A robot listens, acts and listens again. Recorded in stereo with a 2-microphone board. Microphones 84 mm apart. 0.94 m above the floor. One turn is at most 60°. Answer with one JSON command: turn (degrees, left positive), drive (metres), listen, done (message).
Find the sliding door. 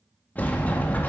{"turn": 20}
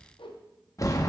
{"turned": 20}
{"turn": 60}
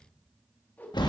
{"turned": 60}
{"turn": 60}
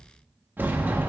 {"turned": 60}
{"turn": -25}
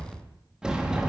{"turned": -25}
{"turn": -10}
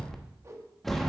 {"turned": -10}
{"done": "Facing the sliding door."}